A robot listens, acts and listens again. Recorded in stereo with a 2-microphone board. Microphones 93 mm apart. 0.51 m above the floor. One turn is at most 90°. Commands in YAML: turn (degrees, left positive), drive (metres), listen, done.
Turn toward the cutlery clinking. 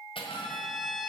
turn: 75
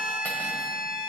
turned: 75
listen: true
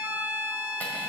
listen: true
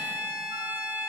done: "I heard cutlery clinking, but can't make it out now. It was about straight ahead or 30° left."